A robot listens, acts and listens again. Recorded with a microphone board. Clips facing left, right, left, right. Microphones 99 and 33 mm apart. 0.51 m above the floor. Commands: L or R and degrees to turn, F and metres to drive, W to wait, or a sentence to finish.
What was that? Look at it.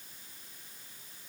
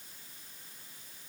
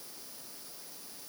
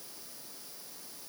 W
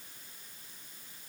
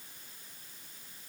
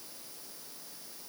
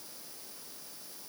W
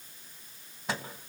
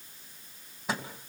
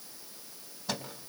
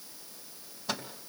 R30
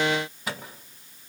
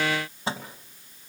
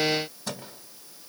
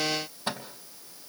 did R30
R150
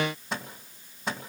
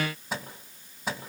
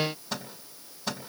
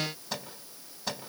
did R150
Facing the microwave, 2 to 4 m away.